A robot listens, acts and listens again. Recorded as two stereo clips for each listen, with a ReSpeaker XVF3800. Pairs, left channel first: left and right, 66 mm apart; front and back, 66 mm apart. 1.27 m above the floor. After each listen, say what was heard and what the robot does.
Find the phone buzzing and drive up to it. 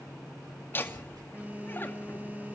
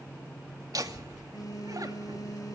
The phone buzzing: 25° right. Turn 25° right.
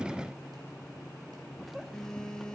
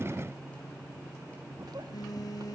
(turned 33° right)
The phone buzzing is now 10° left. Turn 10° left.
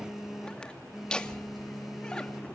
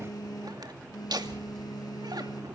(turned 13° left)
Drive 1.0 m forward.
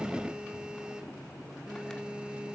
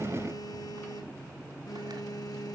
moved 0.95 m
The phone buzzing is now 15° right. Turn 15° right.
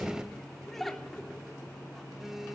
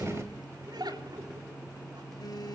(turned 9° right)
Drive 1.0 m forward.
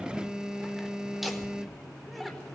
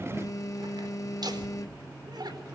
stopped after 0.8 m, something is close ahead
The phone buzzing is now 10° right. Turn 10° right.
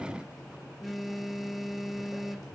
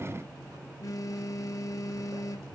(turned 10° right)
Arrived at the phone buzzing, straight ahead.